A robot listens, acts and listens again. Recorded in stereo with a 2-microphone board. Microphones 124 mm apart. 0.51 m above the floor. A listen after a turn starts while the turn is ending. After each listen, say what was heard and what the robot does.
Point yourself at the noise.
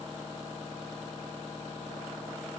Keep listening.
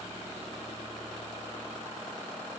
Keep listening.
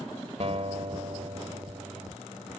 The guitar: about 60° right or 120° right. Turn 60° right.
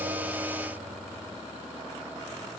Keep listening.
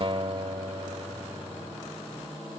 So it is at 50° right. Turn 50° right.
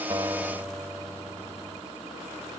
The guitar is now 15° right. Turn 15° right.
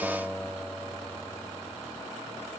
Facing the guitar.